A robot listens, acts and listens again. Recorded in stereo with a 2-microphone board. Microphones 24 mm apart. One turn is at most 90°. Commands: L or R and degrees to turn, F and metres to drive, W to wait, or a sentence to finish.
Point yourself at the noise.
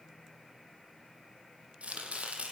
R90
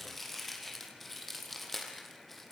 Facing the chopping.